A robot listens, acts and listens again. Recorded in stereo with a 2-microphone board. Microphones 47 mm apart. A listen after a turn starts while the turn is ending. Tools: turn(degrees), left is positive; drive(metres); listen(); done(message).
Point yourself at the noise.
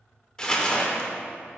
turn(degrees=20)
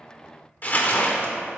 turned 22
turn(degrees=140)
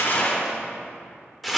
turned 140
done("Facing the crumpling.")